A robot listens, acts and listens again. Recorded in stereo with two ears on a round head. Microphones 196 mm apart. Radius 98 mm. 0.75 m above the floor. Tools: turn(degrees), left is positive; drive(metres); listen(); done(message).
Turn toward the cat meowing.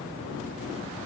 listen()
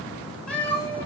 turn(degrees=30)
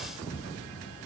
listen()
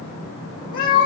turn(degrees=135)
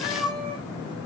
done("Facing the cat meowing.")